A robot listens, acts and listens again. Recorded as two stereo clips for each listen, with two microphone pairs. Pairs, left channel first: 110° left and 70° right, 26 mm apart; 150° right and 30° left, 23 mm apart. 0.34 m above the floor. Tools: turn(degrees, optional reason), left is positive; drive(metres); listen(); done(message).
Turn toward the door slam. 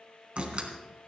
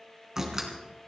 turn(degrees=-35, reason="The door slam: 35° right.")
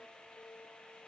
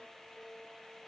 done("Facing where the door slam came from. I can't hear it now.")